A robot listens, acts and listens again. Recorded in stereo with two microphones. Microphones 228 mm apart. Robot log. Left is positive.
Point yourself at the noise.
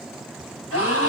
cmd yaw +90
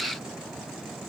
end: Facing where the gasp came from. I can't hear it now.